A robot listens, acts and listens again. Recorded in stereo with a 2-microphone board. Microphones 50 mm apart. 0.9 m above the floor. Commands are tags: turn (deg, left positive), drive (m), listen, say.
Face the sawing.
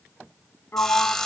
<turn deg="30"/>
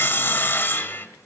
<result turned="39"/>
<turn deg="130"/>
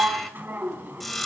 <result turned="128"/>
<say>Found it: sawing, straight ahead, 1 to 2 m away.</say>